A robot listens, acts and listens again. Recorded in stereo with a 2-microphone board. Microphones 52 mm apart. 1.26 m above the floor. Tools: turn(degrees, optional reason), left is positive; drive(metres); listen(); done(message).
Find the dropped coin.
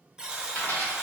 turn(degrees=55, reason="The dropped coin: about 55° left or 125° left.")
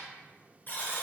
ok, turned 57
listen()
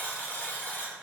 done("I heard a dropped coin, but can't make it out now. It was about 5° right or 70° left.")